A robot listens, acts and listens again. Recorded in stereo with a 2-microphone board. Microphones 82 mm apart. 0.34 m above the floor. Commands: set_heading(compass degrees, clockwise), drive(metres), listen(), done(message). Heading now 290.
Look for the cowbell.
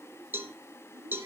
set_heading(315)
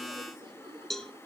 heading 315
done("Facing the cowbell, under 1 m away.")